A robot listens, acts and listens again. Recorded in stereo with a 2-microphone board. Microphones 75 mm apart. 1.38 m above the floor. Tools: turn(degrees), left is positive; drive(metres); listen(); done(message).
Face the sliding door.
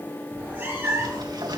turn(degrees=-60)
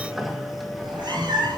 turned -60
done("Facing the sliding door, 2 to 4 m away.")